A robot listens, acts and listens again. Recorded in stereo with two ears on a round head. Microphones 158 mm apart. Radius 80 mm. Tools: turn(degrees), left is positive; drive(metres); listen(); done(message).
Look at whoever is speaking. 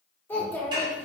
turn(degrees=30)
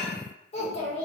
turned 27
turn(degrees=140)
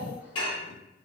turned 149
turn(degrees=-10)
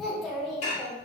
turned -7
done("Facing the child speaking, 1 to 2 m away.")